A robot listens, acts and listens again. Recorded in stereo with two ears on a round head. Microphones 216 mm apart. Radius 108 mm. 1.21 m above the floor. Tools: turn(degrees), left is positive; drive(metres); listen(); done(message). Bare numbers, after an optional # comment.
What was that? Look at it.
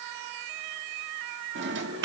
# The drawer: about 50° right or 130° right.
turn(-50)
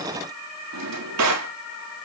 # So it is at 80° right.
turn(-80)
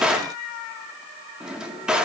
done("Found it: a drawer, straight ahead.")